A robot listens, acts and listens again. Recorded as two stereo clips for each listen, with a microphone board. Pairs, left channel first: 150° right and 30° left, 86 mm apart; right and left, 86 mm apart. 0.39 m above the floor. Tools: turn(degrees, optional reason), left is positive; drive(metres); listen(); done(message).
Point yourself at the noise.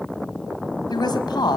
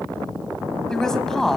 turn(degrees=-175, reason="The woman speaking: 175° right.")
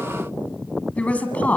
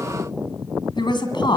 turn(degrees=-80, reason="The woman speaking is now 80° right.")
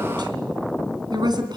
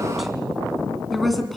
done("Facing the woman speaking.")